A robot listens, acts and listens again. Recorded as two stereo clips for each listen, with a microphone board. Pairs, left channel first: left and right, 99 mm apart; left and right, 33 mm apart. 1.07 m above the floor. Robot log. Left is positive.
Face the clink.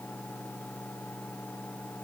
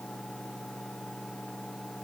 cmd idle
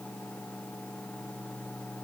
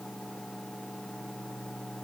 cmd idle
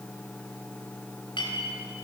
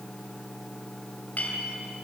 note: The clink: about 55° left or 125° left.
cmd yaw +55
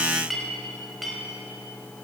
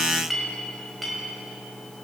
end: Found it: a clink, straight ahead, over 4 m away.